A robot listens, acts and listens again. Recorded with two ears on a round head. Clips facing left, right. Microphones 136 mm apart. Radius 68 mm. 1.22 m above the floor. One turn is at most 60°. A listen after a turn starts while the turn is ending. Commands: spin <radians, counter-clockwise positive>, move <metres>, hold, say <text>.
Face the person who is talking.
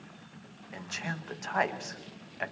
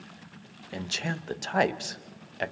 spin -0.61
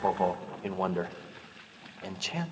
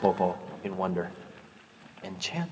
say Facing the man speaking.